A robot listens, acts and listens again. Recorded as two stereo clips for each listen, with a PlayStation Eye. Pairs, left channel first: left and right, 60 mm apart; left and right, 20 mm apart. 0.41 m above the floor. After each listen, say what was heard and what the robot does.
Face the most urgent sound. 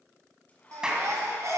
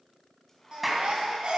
The baby crying: about 60° right or 120° right. Turn 60° right.
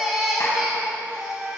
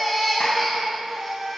Found it: a baby crying, straight ahead.